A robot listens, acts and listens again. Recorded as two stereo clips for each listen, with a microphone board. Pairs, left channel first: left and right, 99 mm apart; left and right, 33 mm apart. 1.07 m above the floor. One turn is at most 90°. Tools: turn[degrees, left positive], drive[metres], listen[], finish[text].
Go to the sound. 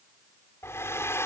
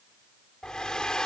Thought: The hair dryer: about 25° left or 155° left.
Action: turn[25]
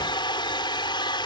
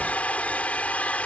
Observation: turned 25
Thought: So it is at 125° left.
Action: turn[90]
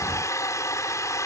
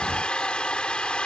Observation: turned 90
Thought: The hair dryer is now 35° left.
Action: turn[35]
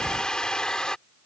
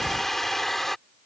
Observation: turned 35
Thought: The hair dryer is now 10° left.
Action: turn[10]
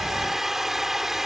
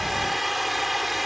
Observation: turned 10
Action: drive[1.0]
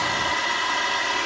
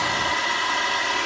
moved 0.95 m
Action: drive[1.0]
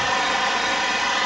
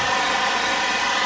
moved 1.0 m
Action: drive[1.0]
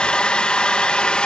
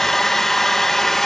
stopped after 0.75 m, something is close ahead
Thought: The hair dryer is now 10° left.
Action: turn[10]
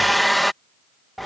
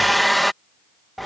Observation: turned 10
Action: finish[Arrived at the hair dryer, straight ahead.]